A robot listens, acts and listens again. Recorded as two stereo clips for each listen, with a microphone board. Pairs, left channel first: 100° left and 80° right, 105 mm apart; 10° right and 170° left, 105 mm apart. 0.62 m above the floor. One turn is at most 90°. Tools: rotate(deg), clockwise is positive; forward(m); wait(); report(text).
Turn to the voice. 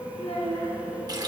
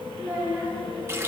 rotate(-90)
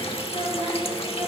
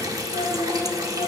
rotate(35)
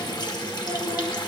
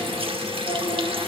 wait()
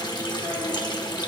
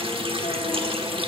wait()
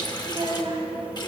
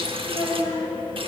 rotate(45)
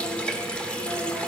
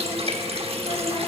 wait()
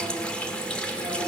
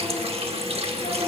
wait()
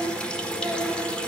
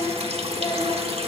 rotate(15)
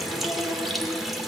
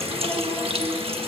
wait()
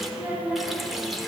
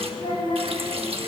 report("Found it: a child speaking, straight ahead.")